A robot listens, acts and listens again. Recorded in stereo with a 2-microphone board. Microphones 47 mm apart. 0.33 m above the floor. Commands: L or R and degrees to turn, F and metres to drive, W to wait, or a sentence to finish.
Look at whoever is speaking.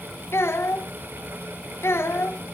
L60
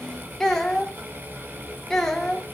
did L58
L10
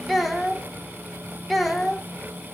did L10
Facing the child speaking, 1 to 2 m away.